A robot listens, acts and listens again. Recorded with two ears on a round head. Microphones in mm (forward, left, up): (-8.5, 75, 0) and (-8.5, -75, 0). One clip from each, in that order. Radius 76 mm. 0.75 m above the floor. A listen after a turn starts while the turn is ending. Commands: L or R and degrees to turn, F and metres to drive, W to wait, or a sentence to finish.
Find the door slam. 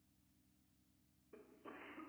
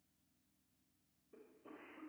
W
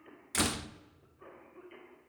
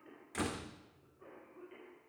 L90
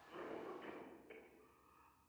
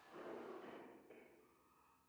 I heard a door slam from this way, but can't make it out now.